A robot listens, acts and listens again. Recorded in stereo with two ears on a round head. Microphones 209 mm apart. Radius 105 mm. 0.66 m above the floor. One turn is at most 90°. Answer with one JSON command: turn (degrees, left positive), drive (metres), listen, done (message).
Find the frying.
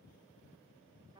{"listen": true}
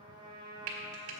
{"turn": -65}
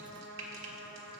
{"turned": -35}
{"turn": -65}
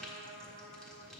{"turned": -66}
{"done": "Facing the frying, 1 to 2 m away."}